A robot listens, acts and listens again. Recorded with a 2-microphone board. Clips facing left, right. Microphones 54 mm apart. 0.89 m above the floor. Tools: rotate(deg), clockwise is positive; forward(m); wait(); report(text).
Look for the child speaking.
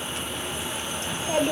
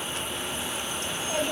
rotate(-40)
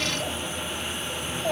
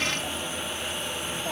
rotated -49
rotate(-100)
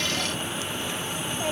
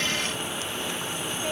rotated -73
rotate(-30)
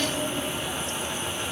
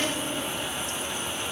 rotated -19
rotate(-20)
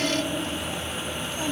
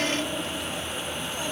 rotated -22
report("Found it: a child speaking, straight ahead.")